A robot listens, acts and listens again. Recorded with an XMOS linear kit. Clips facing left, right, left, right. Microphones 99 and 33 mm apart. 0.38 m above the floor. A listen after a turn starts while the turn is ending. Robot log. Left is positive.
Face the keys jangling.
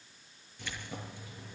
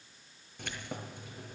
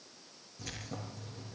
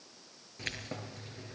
note: The keys jangling: about 55° right or 125° right.
cmd yaw -55
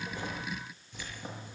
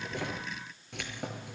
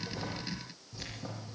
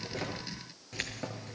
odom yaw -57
note: So it is at 70° right.
cmd yaw -70
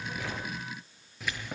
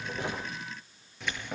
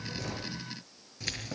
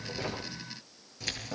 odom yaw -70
end: Found it: keys jangling, straight ahead, over 4 m away.